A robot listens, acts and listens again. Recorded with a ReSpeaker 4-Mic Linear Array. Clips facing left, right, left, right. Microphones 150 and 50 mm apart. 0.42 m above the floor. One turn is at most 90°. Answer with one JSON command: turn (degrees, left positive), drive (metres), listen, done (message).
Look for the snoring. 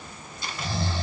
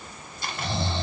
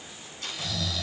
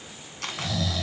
{"turn": -25}
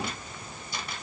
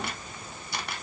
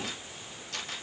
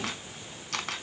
{"listen": true}
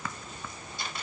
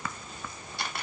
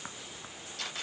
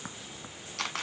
{"listen": true}
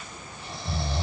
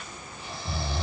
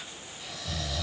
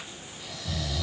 {"done": "Facing the snoring, 1 to 2 m away."}